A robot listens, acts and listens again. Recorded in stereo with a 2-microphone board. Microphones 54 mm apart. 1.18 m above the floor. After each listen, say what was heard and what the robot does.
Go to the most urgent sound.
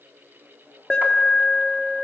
The alarm: about 15° left or 165° left. Turn 15° left.
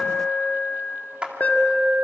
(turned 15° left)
So it is at 150° left. Turn 150° left.
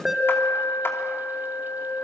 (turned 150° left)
Drive 1.0 m forward.
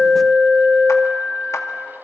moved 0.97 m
Drive 1.0 m forward.
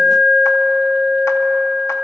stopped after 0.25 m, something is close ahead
I am next to the alarm.